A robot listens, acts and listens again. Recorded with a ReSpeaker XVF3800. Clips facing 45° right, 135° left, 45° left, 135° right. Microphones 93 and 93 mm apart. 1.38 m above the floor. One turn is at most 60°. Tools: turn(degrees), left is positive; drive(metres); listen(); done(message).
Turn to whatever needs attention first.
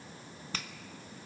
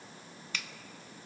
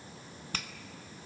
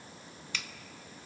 listen()
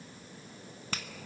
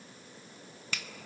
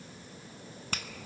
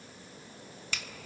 listen()
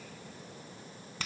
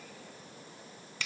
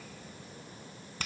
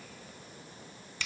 done("I can't make out anything urgent, only a finger snap.")